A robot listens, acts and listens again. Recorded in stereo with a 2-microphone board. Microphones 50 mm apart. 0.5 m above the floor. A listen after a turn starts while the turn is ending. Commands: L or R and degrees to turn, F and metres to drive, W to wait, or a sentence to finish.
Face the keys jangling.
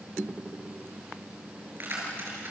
R45
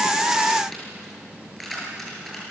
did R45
Found it: keys jangling, straight ahead.